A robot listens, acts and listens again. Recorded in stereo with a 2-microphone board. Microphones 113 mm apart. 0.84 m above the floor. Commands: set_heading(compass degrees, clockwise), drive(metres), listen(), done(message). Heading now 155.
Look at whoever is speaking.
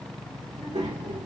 set_heading(245)
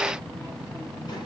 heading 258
set_heading(218)
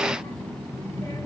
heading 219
set_heading(189)
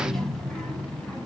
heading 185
set_heading(170)
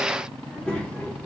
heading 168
set_heading(158)
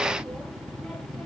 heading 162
done("Facing the child speaking.")